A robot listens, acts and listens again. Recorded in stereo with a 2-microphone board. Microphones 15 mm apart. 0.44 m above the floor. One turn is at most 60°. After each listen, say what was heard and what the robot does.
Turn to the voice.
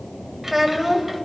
The child speaking: about 20° right or 160° right. Turn 20° right.
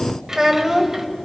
So it is at 140° right. Turn 60° right.
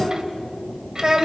The child speaking is now 65° right. Turn 60° right.
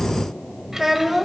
The child speaking is now 35° right. Turn 35° right.
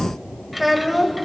Facing the child speaking.